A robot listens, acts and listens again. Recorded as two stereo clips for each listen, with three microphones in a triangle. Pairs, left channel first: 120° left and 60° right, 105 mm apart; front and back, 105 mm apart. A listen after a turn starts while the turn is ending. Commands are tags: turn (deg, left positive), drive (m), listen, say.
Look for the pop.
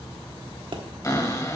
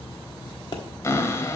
<turn deg="-35"/>
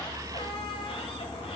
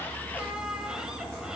<say>I heard a pop from this way, but can't make it out now.</say>